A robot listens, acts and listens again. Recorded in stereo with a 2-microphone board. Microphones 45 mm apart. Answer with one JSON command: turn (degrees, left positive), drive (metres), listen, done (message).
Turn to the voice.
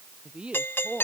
{"turn": -25}
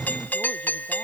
{"listen": true}
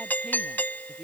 {"listen": true}
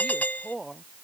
{"done": "Found it: a woman speaking, straight ahead."}